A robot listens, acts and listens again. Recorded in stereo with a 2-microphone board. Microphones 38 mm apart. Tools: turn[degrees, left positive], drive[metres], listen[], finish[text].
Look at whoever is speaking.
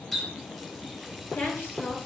Thought: The woman speaking: about 75° left or 105° left.
Action: turn[75]
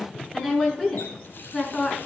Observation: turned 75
Thought: So it is at 15° left.
Action: turn[15]
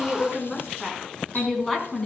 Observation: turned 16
Action: finish[Found it: a woman speaking, straight ahead.]